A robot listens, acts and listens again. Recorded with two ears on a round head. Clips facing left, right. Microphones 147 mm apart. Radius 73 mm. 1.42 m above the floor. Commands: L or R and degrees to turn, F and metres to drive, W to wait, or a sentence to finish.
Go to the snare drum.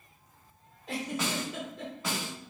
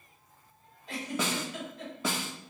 R90
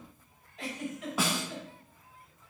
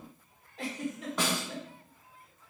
F1.0
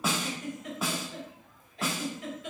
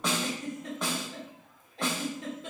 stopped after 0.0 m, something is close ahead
Blocked. The snare drum is further on, straight ahead.